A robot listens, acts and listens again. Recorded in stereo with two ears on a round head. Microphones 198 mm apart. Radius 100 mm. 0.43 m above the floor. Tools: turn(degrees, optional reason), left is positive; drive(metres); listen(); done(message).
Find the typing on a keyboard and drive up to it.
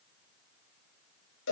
listen()
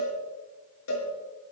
listen()
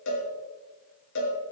done("I can't make out typing on a keyboard to turn to.")